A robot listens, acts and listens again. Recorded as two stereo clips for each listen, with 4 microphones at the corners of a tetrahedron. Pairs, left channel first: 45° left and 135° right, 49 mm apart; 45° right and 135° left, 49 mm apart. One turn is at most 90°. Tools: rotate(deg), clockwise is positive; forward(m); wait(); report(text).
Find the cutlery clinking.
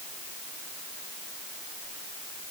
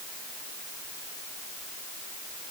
wait()
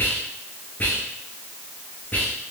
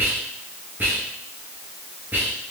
wait()
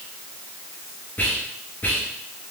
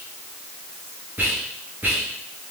report("I can't make out cutlery clinking to turn to.")